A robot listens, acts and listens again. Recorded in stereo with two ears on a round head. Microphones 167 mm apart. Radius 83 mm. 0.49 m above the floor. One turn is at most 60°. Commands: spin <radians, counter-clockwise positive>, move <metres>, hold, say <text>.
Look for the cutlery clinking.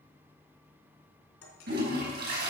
spin 1.05
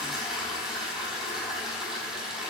spin 0.52
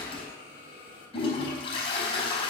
hold
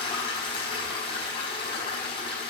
say Facing where the cutlery clinking came from. I can't hear it now.